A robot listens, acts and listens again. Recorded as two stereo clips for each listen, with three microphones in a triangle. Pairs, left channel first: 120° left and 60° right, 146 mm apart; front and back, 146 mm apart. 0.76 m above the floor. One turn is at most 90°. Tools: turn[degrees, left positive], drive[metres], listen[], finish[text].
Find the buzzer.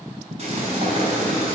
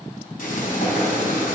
Action: listen[]
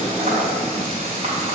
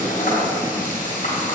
Action: listen[]
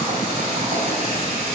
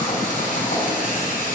Action: finish[I can't make out a buzzer, only frying.]